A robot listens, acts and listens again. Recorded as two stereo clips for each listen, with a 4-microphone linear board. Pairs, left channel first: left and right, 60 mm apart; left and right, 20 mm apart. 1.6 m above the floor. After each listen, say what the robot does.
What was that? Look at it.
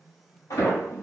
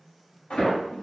Turn 75° left.
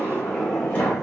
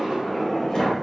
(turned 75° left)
Turn 25° left.
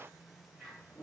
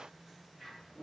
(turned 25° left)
Keep listening.
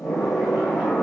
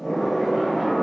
Facing the sliding door.